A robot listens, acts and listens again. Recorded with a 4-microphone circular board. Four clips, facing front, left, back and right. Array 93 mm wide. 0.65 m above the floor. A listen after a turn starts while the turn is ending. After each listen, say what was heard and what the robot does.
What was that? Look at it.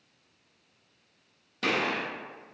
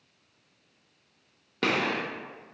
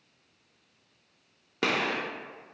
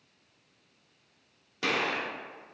The gunshot: 155° left. Turn 155° left.
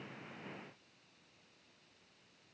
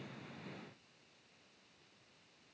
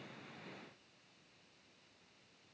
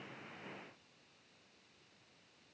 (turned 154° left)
Facing where the gunshot came from. I can't hear it now.